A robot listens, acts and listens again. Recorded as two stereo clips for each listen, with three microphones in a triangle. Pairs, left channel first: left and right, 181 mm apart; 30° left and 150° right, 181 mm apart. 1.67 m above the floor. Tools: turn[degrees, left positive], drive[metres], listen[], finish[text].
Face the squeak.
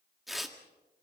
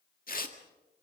Action: listen[]
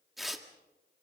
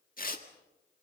Action: listen[]
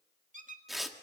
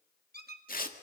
Thought: The squeak: 130° right.
Action: turn[-130]
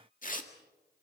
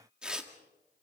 Action: listen[]
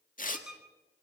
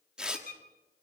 Action: finish[Facing the squeak, 1 to 2 m away.]